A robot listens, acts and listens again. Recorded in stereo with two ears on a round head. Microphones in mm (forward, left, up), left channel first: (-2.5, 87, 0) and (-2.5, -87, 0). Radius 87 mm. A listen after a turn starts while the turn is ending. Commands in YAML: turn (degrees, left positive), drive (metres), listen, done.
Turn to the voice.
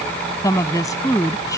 turn: 20
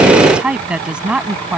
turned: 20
done: "Facing the woman speaking."